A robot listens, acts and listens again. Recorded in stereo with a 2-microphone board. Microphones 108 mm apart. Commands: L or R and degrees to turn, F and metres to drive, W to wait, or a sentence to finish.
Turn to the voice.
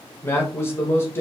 L25
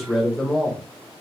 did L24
Facing the man speaking.